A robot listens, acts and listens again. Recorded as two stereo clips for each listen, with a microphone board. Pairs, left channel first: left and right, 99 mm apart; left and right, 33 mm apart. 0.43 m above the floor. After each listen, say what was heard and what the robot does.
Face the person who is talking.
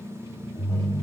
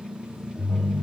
Keep listening.
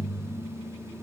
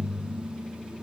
Keep listening.
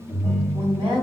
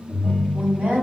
The woman speaking: about 60° right or 120° right. Turn 60° right.
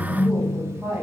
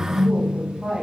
So it is at 10° right. Turn 10° right.
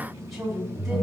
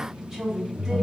Facing the woman speaking.